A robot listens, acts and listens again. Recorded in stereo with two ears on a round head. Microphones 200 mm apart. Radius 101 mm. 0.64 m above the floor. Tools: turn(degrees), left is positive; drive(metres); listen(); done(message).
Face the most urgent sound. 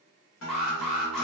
turn(degrees=30)
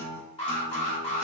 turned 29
turn(degrees=150)
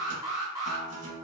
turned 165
turn(degrees=-15)
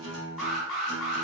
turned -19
done("Facing the alarm, under 1 m away.")